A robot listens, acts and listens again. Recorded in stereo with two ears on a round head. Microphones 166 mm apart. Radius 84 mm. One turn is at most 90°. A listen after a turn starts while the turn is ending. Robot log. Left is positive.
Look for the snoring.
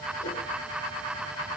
cmd idle
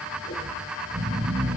note: The snoring: about 20° right or 160° right.
cmd yaw -20
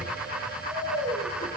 end: Found it: snoring, straight ahead, over 4 m away.